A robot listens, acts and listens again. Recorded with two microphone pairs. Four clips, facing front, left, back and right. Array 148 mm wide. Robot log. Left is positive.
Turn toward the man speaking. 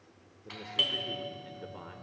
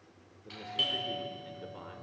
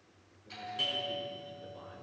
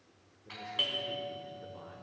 note: The man speaking: 30° left.
cmd yaw +30
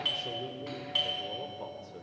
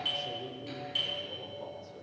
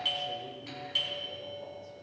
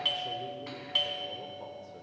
end: Facing the man speaking.